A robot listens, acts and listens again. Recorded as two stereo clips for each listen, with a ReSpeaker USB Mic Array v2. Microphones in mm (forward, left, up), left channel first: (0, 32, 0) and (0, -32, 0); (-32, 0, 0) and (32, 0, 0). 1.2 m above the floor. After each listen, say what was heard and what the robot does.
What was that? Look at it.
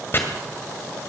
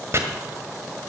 The chopping: 40° left. Turn 40° left.
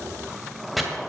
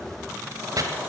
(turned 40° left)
Facing the chopping, 1 to 2 m away.